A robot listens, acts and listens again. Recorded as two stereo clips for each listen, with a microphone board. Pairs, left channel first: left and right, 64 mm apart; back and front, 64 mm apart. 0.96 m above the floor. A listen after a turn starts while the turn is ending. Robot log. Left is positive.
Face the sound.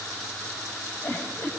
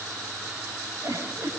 note: The giggle: 40° left.
cmd yaw +40
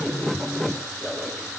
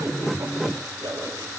end: Facing the giggle.